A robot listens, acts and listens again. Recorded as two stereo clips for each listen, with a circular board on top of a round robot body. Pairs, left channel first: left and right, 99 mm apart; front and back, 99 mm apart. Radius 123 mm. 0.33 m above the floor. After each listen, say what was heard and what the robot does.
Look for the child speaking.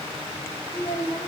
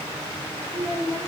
The child speaking: 160° right. Turn 160° right.
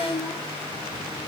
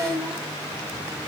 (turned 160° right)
The child speaking is now 50° right. Turn 50° right.
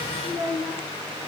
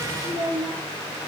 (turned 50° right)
Facing the child speaking, over 4 m away.